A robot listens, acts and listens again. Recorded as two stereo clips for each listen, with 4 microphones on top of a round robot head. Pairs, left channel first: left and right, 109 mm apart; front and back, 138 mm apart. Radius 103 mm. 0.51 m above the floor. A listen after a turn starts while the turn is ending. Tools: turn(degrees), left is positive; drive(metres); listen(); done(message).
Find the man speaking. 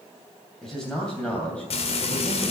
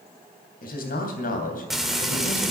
turn(degrees=10)
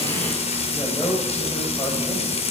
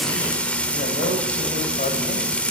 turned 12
turn(degrees=15)
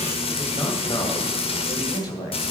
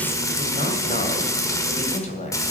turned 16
turn(degrees=30)
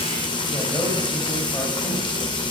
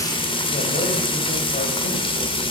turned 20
turn(degrees=10)
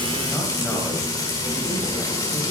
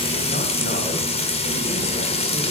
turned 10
listen()
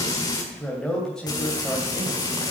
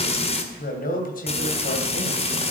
done("Facing the man speaking, 2 to 4 m away.")